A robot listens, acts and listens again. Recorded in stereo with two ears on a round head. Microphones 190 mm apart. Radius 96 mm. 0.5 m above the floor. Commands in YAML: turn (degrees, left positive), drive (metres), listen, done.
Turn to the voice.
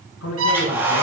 turn: 90
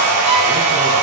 listen: true
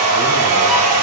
listen: true
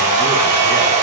done: "Facing where the man speaking came from. I can't hear it now."